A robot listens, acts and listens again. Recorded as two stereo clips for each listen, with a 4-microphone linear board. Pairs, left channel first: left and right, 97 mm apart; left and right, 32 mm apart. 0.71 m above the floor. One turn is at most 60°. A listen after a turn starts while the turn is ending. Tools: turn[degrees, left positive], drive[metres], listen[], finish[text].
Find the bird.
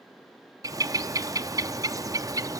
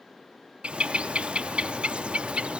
Thought: The bird: about 40° right or 140° right.
Action: turn[-40]
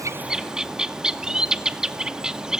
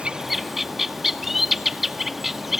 Thought: So it is at 10° right.
Action: turn[-10]
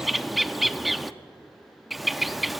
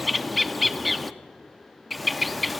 Action: finish[Facing the bird.]